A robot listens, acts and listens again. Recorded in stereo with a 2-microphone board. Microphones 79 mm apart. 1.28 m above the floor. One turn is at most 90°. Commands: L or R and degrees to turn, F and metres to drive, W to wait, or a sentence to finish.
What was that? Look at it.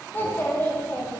L25
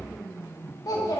L90
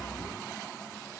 L40
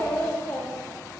L25
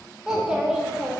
R10
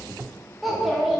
Facing the child speaking, 1 to 2 m away.